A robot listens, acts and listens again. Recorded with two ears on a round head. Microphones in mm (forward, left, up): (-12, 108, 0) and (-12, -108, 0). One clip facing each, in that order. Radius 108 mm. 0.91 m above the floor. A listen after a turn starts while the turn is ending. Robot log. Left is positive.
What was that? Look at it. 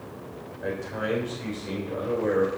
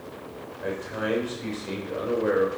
cmd yaw -30
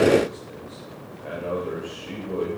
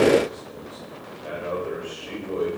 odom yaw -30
cmd yaw -30
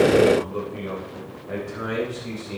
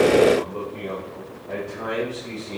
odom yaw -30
note: So it is at 15° left.
cmd yaw +15
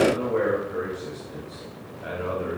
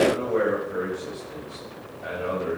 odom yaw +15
end: Facing the man speaking.